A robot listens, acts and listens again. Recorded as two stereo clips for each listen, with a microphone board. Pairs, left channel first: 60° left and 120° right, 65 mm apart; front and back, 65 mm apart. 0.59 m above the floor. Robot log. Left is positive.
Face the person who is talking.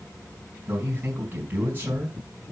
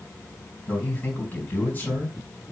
note: The man speaking: 65° right.
cmd yaw -65
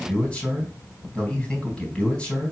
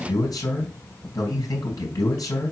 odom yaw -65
note: The man speaking is now 15° right.
cmd yaw -15
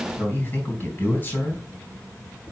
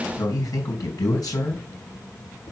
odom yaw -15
end: Found it: a man speaking, straight ahead.